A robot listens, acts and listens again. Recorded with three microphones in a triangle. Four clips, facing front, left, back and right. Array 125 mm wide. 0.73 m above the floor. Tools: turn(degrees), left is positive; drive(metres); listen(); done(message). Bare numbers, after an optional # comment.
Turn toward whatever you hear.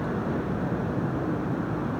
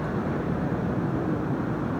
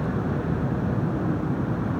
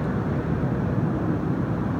listen()
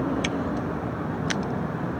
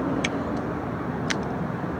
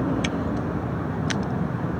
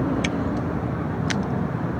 listen()
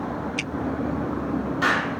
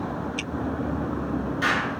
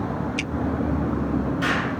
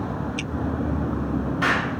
# The explosion: 50° right.
turn(-50)
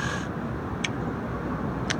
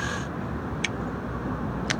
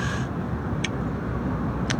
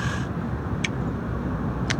done("Facing where the explosion came from. I can't hear it now.")